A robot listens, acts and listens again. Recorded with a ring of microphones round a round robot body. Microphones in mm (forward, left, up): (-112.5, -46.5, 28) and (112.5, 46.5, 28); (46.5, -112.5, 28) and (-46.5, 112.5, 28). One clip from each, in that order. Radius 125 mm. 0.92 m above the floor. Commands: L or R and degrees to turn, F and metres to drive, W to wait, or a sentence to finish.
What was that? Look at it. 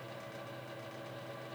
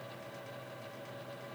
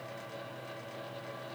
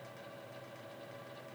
W
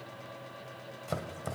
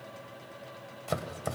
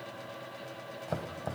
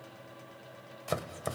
L100
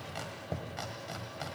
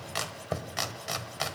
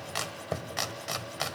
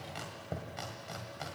R20
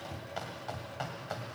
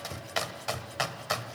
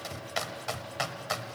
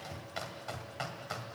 Found it: chopping, straight ahead.